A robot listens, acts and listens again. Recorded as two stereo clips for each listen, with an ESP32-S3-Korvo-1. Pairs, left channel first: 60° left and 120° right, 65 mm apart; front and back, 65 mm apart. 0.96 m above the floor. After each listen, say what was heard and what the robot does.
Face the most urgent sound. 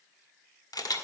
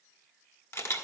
Keep listening.
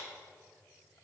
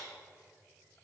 Keep listening.
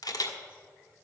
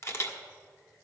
I can't make out anything urgent, only a camera shutter.